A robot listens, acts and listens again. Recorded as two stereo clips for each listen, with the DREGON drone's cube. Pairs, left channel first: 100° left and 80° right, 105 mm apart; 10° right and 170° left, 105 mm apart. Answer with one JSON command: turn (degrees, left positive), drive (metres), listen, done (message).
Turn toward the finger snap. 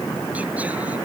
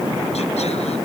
{"listen": true}
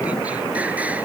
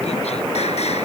{"listen": true}
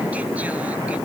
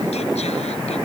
{"done": "I can't make out a finger snap to turn to."}